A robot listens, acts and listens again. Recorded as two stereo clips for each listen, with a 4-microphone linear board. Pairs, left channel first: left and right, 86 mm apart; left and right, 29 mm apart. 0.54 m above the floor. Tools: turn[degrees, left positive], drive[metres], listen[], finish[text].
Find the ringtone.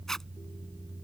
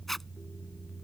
Action: listen[]
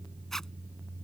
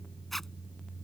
Action: listen[]
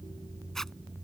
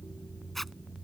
Action: finish[I can't make out a ringtone, only a zipper.]